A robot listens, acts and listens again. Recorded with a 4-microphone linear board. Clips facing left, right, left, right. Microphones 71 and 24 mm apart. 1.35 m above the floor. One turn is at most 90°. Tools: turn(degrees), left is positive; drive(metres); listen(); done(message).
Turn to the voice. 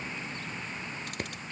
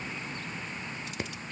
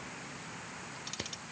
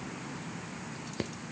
listen()
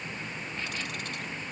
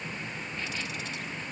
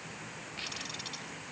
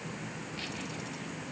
listen()
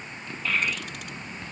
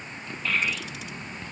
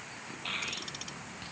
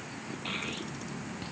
turn(degrees=30)
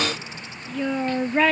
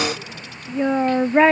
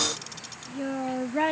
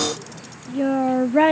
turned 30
turn(degrees=-30)
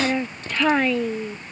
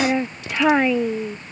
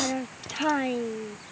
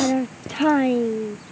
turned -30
turn(degrees=-10)
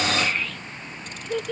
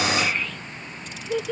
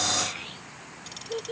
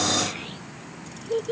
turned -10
done("Facing the child speaking.")